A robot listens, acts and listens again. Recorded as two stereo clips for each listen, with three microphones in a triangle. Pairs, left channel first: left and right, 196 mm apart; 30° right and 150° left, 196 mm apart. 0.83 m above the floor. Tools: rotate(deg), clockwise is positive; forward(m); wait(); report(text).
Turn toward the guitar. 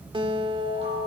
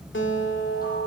rotate(25)
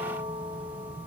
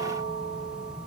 wait()
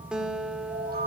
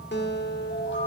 report("Facing the guitar, 1 to 2 m away.")